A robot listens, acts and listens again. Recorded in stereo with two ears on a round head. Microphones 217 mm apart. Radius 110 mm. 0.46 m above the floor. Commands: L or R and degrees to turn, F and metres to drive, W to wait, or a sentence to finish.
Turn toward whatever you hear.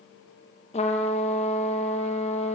L25
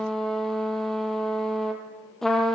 Found it: a trumpet, straight ahead.